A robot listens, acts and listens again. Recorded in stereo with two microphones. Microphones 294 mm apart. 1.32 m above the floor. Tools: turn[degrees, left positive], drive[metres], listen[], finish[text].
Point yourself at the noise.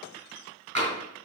Thought: The tapping: about 50° right or 130° right.
Action: turn[-50]
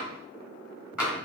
Action: finish[Facing the tapping.]